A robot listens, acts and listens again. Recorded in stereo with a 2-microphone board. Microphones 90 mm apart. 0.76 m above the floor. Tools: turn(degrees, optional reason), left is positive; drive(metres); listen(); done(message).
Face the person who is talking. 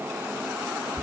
listen()
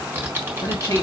turn(degrees=45, reason="The man speaking: about 45° left or 135° left.")
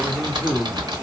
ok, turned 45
turn(degrees=10, reason="So it is at 10° left.")
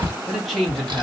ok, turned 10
done("Facing the man speaking.")